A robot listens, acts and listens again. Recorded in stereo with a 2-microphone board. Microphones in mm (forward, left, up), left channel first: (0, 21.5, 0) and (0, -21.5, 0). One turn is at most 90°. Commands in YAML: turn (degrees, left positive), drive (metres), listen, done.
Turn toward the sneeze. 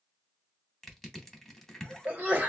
turn: -40
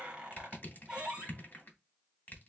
listen: true
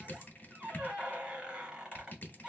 done: "I heard a sneeze, but can't make it out now. It was about straight ahead or 100° right."